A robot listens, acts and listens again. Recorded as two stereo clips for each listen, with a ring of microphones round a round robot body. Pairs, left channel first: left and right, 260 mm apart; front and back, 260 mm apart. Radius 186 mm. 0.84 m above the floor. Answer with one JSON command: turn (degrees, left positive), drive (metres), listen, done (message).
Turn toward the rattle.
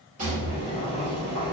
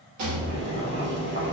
{"turn": -160}
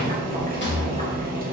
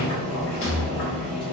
{"turn": 40}
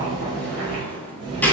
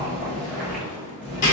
{"done": "Facing the rattle, 1 to 2 m away."}